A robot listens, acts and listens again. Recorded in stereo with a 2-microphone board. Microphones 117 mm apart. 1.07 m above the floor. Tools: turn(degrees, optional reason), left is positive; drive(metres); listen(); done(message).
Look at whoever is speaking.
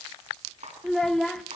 turn(degrees=30)
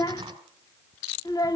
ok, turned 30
turn(degrees=145, reason="So it is at 145° left.")
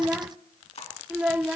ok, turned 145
turn(degrees=-10, reason="The child speaking is now 10° right.")
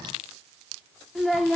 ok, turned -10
done("Found it: a child speaking, straight ahead.")